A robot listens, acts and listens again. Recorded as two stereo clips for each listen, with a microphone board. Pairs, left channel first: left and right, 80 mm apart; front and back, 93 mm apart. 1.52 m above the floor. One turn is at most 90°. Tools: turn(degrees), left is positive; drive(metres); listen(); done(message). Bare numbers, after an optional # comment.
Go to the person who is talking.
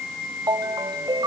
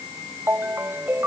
listen()
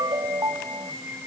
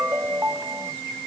listen()
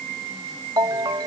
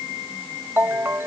done("I can't make out anyone speaking to turn to.")